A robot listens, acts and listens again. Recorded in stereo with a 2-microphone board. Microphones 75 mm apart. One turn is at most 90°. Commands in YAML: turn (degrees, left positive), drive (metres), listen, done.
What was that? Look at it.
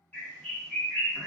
turn: 20
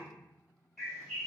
done: "Facing the bird."